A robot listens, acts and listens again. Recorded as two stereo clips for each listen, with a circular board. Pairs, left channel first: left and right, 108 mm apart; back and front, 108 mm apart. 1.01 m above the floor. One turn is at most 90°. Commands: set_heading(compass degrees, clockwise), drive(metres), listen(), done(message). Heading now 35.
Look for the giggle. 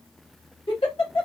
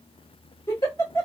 set_heading(305)
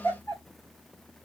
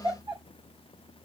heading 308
set_heading(278)
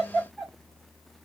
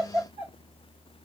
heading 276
done("Found it: a giggle, straight ahead, 2 to 4 m away.")